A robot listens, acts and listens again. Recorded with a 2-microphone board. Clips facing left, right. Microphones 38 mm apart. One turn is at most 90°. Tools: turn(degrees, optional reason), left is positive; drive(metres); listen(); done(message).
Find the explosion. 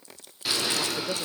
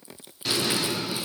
turn(degrees=30)
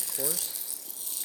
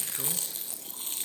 listen()
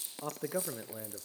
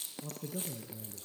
done("I heard an explosion, but can't make it out now. It was about 30° right or 150° left.")